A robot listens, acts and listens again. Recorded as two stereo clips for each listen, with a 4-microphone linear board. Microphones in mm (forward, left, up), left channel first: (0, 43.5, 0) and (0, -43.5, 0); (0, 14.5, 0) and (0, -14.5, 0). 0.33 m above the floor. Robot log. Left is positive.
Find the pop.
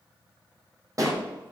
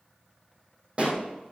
note: The pop: about 40° right or 140° right.
cmd yaw -40
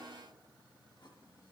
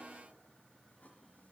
cmd idle
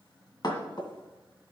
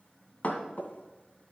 end: I heard a pop, but can't make it out now. It was about straight ahead or 100° right.